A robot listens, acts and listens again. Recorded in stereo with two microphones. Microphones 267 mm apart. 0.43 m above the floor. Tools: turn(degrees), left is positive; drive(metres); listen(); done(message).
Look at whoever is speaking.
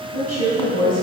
turn(degrees=-70)
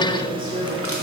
turn(degrees=-35)
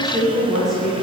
done("Facing the woman speaking, over 4 m away.")